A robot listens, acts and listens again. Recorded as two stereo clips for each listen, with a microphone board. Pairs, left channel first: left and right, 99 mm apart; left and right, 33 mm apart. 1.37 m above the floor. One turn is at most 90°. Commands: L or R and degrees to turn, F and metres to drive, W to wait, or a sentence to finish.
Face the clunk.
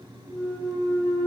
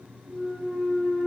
L30
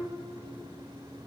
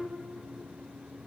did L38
W
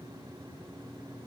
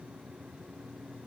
I heard a clunk, but can't make it out now. It was about 30° right or 130° left.